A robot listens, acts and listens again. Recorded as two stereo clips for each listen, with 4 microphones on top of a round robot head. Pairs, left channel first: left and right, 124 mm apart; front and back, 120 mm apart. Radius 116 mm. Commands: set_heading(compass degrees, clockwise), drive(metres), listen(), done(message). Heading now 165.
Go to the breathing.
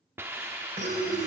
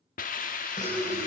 set_heading(215)
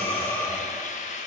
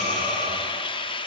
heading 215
set_heading(205)
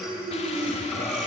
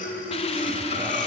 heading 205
drive(1.0)
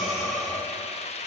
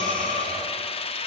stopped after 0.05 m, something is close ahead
done("Something is in my way. I am facing the breathing but have not reached it.")